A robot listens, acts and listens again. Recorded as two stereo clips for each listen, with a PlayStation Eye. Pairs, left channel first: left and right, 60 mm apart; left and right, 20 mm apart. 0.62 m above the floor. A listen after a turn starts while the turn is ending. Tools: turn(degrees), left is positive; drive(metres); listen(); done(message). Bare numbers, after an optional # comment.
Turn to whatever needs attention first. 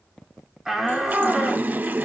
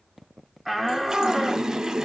turn(-30)
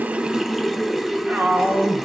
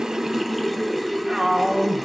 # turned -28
# So it is at 145° right.
turn(-145)
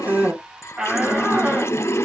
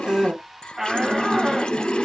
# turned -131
# The shout is now 15° right.
turn(-15)
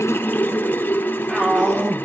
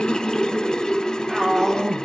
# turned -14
done("Found it: a shout, straight ahead, 1 to 2 m away.")